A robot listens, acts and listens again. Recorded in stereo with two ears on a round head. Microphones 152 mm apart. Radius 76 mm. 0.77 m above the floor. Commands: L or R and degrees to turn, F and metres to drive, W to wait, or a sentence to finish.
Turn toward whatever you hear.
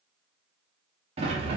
R35
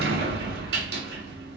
R110
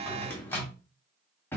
L15
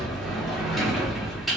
Found it: a sliding door, straight ahead, 1 to 2 m away.